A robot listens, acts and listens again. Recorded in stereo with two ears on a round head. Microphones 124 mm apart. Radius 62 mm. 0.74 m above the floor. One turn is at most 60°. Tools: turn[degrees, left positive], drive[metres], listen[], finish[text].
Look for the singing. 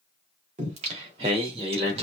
Thought: The singing: about 40° right or 140° right.
Action: turn[-40]
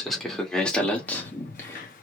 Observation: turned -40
Thought: So it is at 20° left.
Action: turn[20]
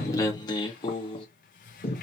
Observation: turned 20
Thought: The singing is now 50° left.
Action: turn[50]
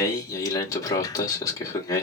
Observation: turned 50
Thought: The singing is now 30° left.
Action: turn[30]
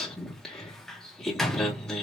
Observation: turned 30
Action: finish[Facing the singing.]